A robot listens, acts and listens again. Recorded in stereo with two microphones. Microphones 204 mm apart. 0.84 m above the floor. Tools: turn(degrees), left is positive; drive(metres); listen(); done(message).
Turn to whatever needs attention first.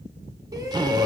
turn(degrees=-20)
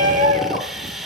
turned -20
turn(degrees=-140)
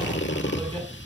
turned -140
turn(degrees=-25)
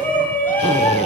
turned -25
turn(degrees=10)
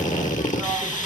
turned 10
listen()
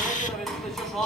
done("Facing the shout.")